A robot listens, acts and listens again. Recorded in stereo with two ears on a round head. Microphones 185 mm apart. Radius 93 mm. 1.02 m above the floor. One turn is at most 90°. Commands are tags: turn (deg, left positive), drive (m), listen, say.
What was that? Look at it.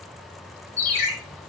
<turn deg="30"/>
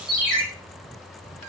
<say>Found it: a ringtone, straight ahead, under 1 m away.</say>